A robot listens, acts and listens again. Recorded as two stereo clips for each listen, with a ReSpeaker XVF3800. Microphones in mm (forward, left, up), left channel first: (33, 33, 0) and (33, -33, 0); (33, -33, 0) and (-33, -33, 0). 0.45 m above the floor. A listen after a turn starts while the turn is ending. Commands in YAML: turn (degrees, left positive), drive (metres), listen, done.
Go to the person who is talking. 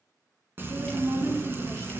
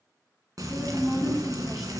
turn: -100
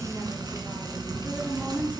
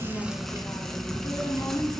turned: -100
turn: -35
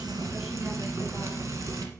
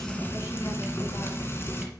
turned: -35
drive: 1.0
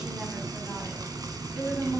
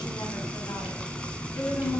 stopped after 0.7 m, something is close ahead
turn: -10
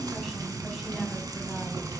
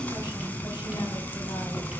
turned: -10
listen: true
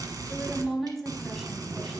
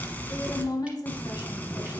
done: "Something is in my way. I am facing the woman speaking but have not reached it."